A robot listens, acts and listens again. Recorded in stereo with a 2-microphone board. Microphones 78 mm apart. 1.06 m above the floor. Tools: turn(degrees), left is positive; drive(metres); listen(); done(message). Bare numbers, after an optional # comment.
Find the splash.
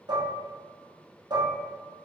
listen()
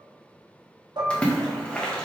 turn(30)
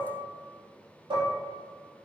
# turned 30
listen()
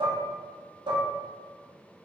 done("I heard a splash, but can't make it out now. It was about 20° right or 140° left.")